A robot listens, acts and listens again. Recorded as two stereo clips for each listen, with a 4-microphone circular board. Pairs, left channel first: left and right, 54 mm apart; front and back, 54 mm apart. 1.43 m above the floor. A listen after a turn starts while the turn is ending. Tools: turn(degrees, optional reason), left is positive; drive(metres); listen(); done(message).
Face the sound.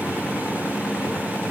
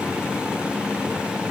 listen()
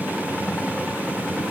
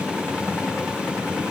listen()
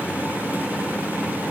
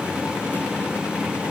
done("I can't make out anything to turn to.")